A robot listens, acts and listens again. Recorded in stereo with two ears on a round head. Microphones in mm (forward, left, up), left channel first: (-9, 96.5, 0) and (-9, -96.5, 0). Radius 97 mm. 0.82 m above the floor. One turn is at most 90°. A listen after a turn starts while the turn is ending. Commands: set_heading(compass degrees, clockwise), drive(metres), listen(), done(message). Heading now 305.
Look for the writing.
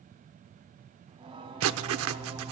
set_heading(20)
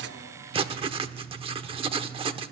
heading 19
set_heading(44)
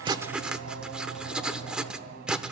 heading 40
done("Facing the writing.")